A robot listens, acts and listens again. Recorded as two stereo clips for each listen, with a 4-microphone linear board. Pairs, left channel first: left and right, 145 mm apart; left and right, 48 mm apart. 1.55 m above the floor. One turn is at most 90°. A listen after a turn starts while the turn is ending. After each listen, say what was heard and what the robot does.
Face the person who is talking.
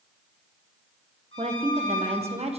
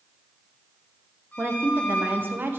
The woman speaking: about 45° right or 135° right. Turn 45° right.
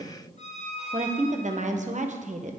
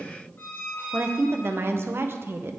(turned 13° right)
So it is at 125° right. Turn 90° right.
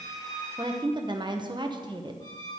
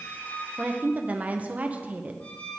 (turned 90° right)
The woman speaking is now 30° right. Turn 30° right.
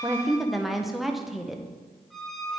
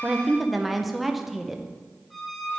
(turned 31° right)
Found it: a woman speaking, straight ahead.